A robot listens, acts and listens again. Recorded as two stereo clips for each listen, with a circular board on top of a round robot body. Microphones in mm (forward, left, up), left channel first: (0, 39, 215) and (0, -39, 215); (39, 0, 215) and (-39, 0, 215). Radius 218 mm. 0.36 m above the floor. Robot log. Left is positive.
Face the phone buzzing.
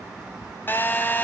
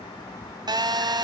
note: The phone buzzing: 155° left.
cmd yaw +155
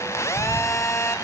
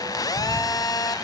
note: The phone buzzing is now 35° left.
cmd yaw +35
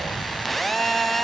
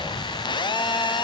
end: Facing the phone buzzing.